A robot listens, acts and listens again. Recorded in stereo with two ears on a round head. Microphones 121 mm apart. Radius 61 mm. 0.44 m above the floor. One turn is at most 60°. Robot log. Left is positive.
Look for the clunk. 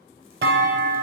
cmd yaw -60
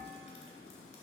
note: Nothing new. It was at 30° right.
cmd yaw -30
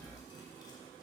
end: Facing where the clunk came from. I can't hear it now.